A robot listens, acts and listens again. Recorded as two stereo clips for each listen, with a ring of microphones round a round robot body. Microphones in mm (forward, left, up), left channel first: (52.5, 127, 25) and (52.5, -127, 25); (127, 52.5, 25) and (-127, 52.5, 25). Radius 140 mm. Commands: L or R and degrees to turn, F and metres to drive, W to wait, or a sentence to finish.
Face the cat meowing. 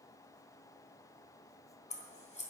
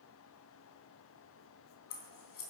W
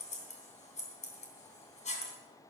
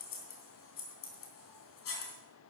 W
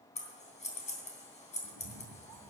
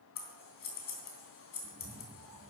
R115
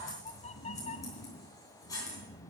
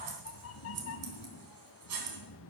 L25
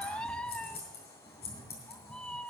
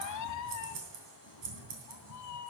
Found it: a cat meowing, straight ahead.